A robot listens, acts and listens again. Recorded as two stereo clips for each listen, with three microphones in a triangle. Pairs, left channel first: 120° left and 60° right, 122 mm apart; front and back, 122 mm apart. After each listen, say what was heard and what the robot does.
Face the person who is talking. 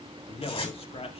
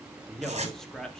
The man speaking: 85° left. Turn 85° left.
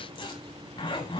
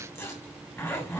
Keep listening.
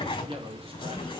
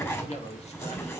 The man speaking is now 20° right. Turn 20° right.
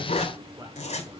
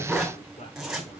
Keep listening.
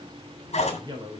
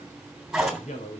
Found it: a man speaking, straight ahead.